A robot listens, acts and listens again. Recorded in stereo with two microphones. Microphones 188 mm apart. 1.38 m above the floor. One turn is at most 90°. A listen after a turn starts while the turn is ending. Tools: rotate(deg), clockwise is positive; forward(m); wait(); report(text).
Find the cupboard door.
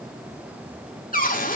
rotate(-50)
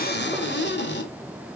rotate(-80)
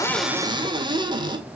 rotate(25)
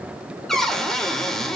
report("Found it: a cupboard door, straight ahead.")